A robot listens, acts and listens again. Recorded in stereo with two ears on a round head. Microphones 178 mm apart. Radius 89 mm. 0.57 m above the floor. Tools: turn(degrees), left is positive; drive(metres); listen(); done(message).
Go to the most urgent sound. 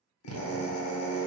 listen()
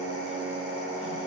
listen()
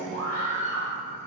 turn(degrees=35)
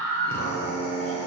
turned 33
turn(degrees=10)
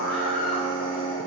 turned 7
drive(metres=1.0)
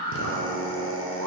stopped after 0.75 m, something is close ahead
done("I am next to the scream.")